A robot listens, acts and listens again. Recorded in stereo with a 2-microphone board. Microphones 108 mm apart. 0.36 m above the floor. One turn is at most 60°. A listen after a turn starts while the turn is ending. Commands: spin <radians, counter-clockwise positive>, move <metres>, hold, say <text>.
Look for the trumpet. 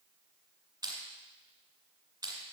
hold
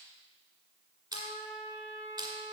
spin 1.05
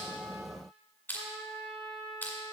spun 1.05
spin 0.52
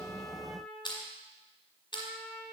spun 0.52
say Found it: a trumpet, straight ahead.